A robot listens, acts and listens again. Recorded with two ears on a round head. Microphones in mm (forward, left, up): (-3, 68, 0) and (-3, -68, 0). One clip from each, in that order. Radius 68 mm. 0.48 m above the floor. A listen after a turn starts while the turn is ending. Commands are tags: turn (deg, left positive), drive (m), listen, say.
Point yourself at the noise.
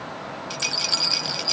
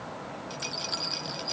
<turn deg="45"/>
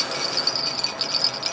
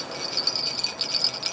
<say>Found it: a rattle, straight ahead.</say>